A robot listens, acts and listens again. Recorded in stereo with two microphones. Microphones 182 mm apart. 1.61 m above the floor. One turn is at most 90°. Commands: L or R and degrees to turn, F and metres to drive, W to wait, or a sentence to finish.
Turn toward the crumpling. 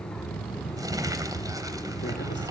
R20
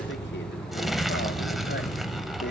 Facing the crumpling, 2 to 4 m away.